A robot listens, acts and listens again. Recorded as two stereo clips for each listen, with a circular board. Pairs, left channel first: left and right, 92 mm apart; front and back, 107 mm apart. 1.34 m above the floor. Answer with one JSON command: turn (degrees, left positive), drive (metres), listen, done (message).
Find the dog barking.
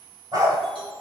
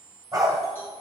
{"turn": -125}
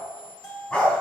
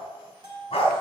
{"turn": 20}
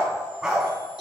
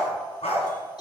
{"done": "Facing the dog barking, 2 to 4 m away."}